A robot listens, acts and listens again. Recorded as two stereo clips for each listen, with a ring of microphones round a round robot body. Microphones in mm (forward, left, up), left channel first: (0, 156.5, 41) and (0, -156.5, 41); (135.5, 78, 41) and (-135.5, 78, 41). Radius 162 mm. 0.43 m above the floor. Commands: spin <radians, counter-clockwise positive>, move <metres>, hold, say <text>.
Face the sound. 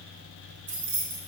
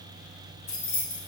spin -0.70
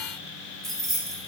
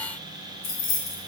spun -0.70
say Found it: keys jangling, straight ahead, 1 to 2 m away.